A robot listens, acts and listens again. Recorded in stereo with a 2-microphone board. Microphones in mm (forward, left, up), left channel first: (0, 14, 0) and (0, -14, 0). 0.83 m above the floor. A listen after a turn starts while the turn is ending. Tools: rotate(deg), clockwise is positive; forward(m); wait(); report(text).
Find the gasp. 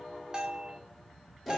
wait()
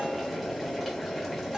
wait()
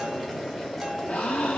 rotate(-55)
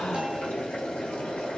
wait()
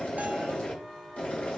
report("I heard a gasp, but can't make it out now. It was about straight ahead or 70° left.")